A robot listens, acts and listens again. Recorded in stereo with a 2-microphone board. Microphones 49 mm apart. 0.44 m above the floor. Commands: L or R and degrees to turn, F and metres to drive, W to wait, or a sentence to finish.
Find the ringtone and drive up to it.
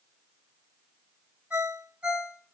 R30
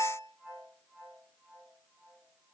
F1.0
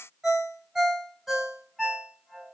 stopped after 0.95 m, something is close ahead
R10
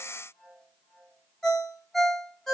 I am next to the ringtone.